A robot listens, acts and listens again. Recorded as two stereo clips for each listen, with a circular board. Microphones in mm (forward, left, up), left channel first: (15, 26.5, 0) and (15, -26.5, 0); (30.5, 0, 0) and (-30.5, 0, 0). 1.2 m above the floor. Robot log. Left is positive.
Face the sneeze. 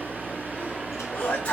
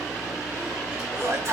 note: The sneeze: 150° left.
cmd yaw +150
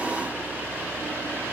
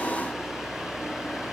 end: I heard a sneeze from this way, but can't make it out now.